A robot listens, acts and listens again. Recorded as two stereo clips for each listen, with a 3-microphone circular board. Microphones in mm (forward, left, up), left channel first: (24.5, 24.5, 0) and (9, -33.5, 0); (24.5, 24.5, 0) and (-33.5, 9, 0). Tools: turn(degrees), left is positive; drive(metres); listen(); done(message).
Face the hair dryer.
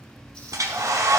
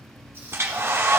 turn(degrees=-120)
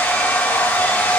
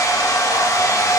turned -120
turn(degrees=15)
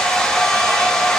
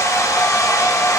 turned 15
done("Found it: a hair dryer, straight ahead, under 1 m away.")